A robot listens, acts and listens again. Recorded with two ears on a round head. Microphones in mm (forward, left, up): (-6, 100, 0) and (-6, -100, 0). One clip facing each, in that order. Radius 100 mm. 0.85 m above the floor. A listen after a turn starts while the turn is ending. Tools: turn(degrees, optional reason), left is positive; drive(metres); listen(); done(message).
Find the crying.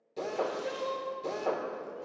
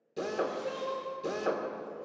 turn(degrees=25, reason="The crying: about 25° left or 155° left.")
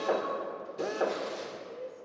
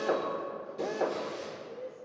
done("Facing the crying.")